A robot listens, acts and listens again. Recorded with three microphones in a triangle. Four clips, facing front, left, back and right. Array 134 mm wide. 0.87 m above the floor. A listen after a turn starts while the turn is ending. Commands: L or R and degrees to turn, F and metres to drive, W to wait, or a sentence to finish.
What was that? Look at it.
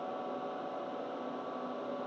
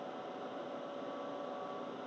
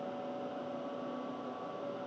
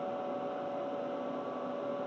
W
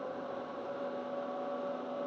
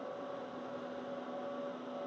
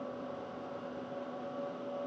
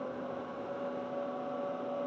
W
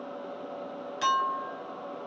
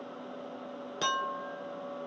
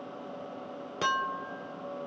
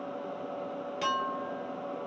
L165
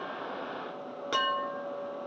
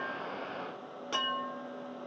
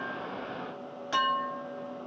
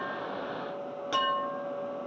Facing the clink, 1 to 2 m away.